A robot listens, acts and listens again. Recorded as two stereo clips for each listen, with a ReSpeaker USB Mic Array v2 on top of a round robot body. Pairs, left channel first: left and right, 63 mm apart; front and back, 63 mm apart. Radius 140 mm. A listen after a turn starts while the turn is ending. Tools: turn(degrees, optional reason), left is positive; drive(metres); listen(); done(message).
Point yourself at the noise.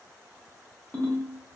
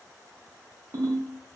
turn(degrees=165, reason="The ringtone: 165° left.")
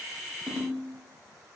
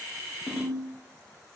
done("Facing the ringtone.")